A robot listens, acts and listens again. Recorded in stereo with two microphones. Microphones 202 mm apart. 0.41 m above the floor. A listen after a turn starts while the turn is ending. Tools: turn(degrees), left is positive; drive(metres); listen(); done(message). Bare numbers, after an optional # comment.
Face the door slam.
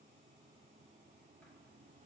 listen()
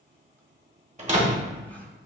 # The door slam: about 35° right or 145° right.
turn(-35)
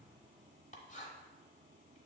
listen()
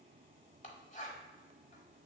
done("I heard a door slam, but can't make it out now. It was about straight ahead or 110° right.")